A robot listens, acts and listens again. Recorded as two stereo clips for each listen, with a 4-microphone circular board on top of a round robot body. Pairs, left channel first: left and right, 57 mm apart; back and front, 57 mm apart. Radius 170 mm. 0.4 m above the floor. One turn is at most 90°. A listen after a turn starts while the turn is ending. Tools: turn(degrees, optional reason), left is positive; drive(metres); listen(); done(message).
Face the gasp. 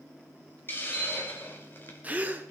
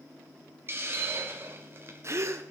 turn(degrees=-30, reason="The gasp: 30° right.")
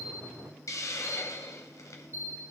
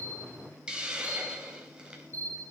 done("Facing where the gasp came from. I can't hear it now.")